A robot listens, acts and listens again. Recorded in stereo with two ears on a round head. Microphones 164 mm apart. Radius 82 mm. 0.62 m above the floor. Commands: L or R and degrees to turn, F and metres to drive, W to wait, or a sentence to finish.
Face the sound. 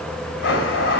L70
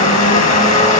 L40
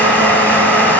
L10
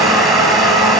Facing the blender, 1 to 2 m away.